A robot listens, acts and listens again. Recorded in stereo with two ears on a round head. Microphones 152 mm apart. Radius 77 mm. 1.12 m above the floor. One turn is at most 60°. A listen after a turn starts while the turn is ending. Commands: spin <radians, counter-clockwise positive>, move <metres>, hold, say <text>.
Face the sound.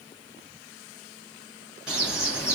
spin -0.52
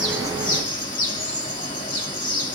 spin 0.52
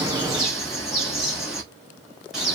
say Found it: a bird, straight ahead, 1 to 2 m away.